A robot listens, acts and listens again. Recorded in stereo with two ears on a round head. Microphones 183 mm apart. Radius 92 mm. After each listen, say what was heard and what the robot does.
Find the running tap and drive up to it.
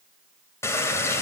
Turn 30° left.
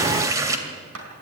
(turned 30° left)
So it is at 15° right. Turn 15° right.
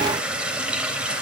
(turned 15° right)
Drive 1.0 m forward.
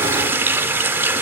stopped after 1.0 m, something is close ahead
The running tap is now 10° right. Turn 10° right.
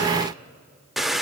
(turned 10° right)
Arrived at the running tap, straight ahead.